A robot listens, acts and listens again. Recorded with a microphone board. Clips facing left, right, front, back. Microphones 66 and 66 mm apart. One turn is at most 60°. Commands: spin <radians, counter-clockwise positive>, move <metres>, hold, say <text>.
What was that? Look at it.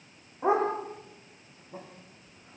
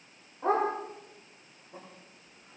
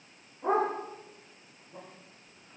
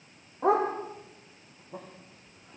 spin 1.05
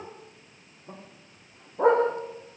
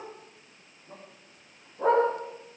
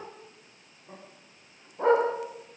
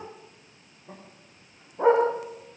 spin 1.05
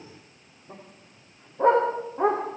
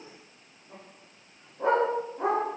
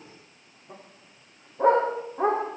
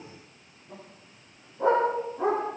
spin 0.87
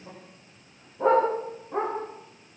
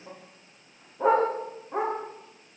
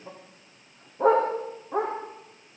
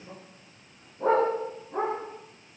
say Found it: a dog barking, straight ahead.